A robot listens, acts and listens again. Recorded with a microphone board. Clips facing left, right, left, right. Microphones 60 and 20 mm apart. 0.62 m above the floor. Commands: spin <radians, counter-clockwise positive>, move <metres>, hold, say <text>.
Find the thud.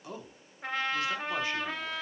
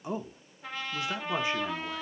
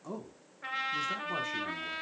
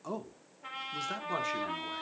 hold
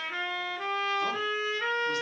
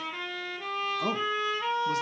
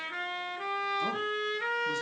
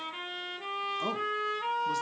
hold
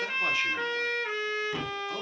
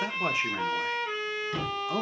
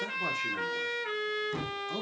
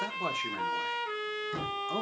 spin 0.52
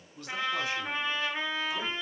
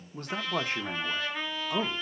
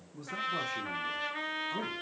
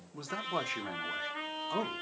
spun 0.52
hold
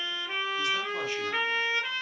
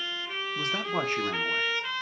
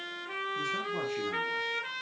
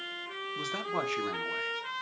say I heard a thud, but can't make it out now. It was about 20° right or 140° left.